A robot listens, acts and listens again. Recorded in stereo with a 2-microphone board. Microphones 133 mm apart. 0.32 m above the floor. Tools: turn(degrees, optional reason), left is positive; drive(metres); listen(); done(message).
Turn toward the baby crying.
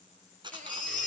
turn(degrees=-90)
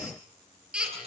done("Found it: a baby crying, straight ahead.")